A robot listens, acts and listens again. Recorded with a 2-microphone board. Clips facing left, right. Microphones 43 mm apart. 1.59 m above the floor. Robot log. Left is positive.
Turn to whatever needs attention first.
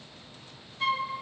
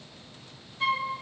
cmd idle
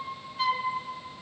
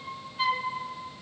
cmd idle
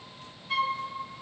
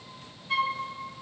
end: I can't make out anything urgent, only a flute.